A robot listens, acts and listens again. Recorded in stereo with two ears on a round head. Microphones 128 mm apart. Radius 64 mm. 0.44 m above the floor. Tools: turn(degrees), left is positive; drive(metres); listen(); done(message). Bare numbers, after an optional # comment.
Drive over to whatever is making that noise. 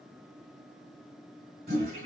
# The toilet flushing: about 60° right or 120° right.
turn(-60)
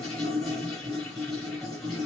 drive(1.0)
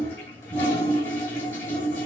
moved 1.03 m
# The toilet flushing is now 15° left.
turn(15)
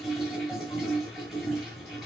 drive(1.0)
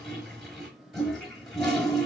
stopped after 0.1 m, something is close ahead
done("Arrived at the toilet flushing, straight ahead.")